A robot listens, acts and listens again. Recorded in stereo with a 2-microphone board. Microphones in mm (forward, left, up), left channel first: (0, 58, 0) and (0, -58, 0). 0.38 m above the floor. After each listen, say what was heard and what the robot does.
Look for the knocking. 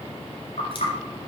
The knocking: about 75° left or 105° left. Turn 75° left.
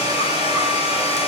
Keep listening.
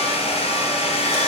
Keep listening.
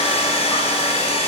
I heard knocking, but can't make it out now. It was about straight ahead or 30° left.